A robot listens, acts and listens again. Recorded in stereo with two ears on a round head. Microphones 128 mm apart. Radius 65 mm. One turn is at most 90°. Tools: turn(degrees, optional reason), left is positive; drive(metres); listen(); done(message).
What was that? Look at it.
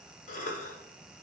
turn(degrees=60, reason="The cough: about 60° left or 120° left.")
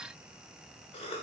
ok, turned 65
turn(degrees=45, reason="So it is at 45° left.")
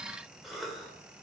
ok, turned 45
done("Facing the cough, 1 to 2 m away.")